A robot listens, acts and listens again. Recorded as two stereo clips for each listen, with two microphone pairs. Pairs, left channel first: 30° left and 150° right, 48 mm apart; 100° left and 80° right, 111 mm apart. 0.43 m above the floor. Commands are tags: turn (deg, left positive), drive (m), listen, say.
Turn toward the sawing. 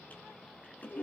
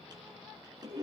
<listen/>
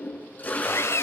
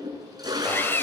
<turn deg="30"/>
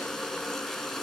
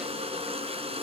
<listen/>
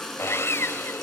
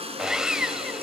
<say>Facing the sawing, 1 to 2 m away.</say>